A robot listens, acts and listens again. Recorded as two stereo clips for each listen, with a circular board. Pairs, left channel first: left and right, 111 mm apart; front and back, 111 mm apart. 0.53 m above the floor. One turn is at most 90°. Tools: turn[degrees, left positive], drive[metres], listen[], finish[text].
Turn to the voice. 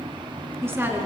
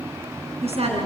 Thought: The woman speaking: 160° right.
Action: turn[-90]
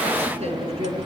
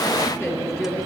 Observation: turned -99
Thought: The woman speaking is now 70° right.
Action: turn[-70]
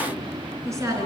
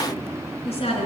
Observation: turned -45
Thought: The woman speaking is now 25° right.
Action: turn[-25]
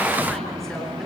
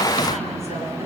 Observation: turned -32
Action: listen[]
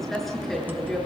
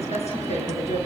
Action: finish[Found it: a woman speaking, straight ahead.]